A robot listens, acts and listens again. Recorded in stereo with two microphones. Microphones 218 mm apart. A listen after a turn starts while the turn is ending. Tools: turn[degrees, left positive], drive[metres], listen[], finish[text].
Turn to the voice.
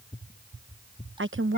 Thought: The woman speaking: about 65° right or 115° right.
Action: turn[-65]
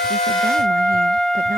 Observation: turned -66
Action: listen[]
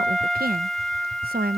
Thought: So it is at 45° right.
Action: turn[-45]
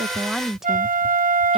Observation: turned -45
Action: finish[Facing the woman speaking.]